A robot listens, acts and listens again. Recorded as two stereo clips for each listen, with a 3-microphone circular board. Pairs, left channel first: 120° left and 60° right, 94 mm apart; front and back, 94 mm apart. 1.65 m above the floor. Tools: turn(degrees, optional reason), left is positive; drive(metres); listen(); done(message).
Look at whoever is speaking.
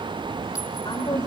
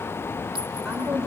turn(degrees=90, reason="The woman speaking: 90° left.")
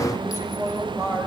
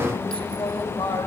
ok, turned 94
done("Found it: a woman speaking, straight ahead.")